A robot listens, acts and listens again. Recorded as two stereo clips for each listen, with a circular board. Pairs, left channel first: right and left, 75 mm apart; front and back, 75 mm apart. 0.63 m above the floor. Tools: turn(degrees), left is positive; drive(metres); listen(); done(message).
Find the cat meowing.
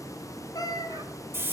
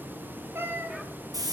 turn(degrees=-120)
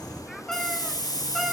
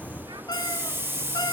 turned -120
listen()
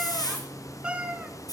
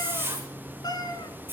turn(degrees=20)
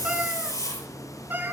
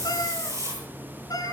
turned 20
turn(degrees=30)
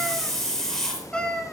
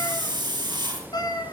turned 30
turn(degrees=-10)
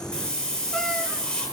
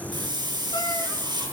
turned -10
listen()
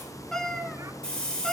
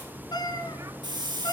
done("Facing the cat meowing.")